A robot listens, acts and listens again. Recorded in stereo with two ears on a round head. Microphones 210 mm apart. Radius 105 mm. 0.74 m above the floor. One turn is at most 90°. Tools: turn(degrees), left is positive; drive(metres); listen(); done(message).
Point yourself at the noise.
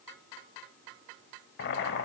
turn(degrees=45)
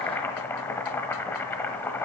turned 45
turn(degrees=10)
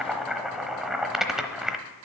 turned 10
done("Found it: boiling, straight ahead.")